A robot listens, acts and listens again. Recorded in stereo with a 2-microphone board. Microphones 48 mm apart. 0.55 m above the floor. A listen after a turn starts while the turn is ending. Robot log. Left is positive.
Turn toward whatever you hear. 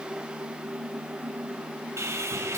cmd yaw -90
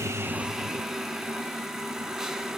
note: So it is at 15° right.
cmd yaw -15
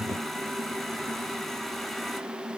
end: Facing the sawing.